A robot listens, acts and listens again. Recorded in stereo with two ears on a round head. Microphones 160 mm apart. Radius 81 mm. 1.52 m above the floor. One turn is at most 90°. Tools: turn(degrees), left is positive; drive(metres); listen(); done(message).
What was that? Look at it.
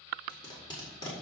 turn(degrees=25)
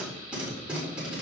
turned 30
done("Found it: tape being pulled, straight ahead.")